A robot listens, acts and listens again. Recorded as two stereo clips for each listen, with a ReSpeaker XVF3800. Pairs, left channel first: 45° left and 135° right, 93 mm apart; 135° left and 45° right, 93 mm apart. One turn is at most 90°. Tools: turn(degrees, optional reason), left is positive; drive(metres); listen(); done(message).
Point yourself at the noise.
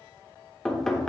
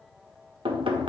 turn(degrees=-40, reason="The knocking: 40° right.")
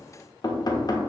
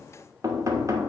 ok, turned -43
done("Found it: knocking, straight ahead, 1 to 2 m away.")